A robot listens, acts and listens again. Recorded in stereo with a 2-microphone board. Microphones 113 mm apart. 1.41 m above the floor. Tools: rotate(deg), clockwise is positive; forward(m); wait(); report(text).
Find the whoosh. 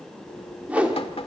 rotate(30)
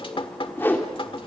rotate(-20)
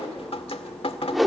report("Found it: a whoosh, straight ahead.")